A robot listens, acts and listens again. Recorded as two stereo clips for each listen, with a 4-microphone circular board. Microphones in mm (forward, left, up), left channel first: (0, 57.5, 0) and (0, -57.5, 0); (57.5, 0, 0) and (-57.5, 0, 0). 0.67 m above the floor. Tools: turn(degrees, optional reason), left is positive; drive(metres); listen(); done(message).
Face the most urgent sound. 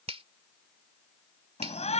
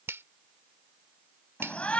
turn(degrees=80, reason="The shout: 80° left.")
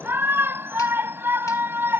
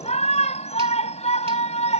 turn(degrees=-20, reason="The shout is now 20° right.")
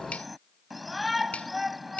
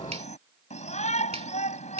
done("Facing the shout.")